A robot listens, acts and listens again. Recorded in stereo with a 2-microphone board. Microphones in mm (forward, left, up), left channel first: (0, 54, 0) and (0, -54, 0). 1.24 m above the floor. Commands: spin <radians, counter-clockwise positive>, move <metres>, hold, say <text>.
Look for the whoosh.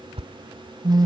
spin -1.05
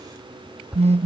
say Found it: a whoosh, straight ahead.